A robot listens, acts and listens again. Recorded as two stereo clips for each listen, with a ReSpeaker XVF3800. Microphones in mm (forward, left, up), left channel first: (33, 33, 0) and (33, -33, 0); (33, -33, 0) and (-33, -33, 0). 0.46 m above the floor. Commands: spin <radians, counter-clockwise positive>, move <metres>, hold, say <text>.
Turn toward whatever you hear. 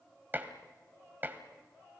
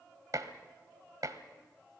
spin -2.62
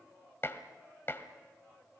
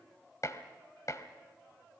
spin 0.70
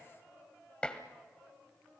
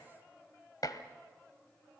spin 0.26
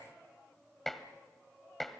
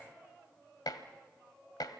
say Found it: dishes clattering, straight ahead.